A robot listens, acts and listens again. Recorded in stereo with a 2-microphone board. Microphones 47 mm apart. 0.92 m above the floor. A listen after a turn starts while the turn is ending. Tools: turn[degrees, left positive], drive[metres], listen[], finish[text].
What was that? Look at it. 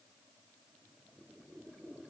Action: listen[]
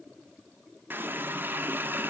Thought: The running tap: about 45° right or 135° right.
Action: turn[-45]
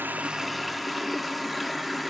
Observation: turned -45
Action: finish[Facing the running tap.]